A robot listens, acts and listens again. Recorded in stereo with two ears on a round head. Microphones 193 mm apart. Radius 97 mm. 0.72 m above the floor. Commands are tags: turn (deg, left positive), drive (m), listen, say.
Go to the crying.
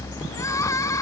<turn deg="30"/>
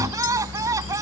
<turn deg="-15"/>
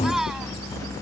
<drive m="1.0"/>
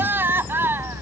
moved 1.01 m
<turn deg="-10"/>
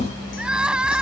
<drive m="1.0"/>
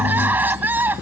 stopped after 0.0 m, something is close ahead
<turn deg="-10"/>
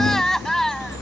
<say>Blocked. The crying is further on, straight ahead.</say>